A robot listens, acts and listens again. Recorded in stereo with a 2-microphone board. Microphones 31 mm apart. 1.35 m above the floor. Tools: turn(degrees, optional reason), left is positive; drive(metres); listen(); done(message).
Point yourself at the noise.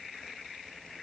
listen()
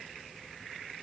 listen()
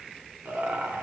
turn(degrees=-90)
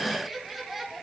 turn(degrees=-15, reason="So it is at 15° right.")
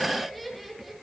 done("Facing the laughter, over 4 m away.")